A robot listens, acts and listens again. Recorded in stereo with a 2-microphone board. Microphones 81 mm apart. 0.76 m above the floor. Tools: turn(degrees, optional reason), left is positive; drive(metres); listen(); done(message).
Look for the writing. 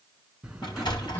turn(degrees=-30)
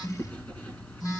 turn(degrees=20, reason="So it is at 20° left.")
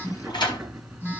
done("Found it: writing, straight ahead.")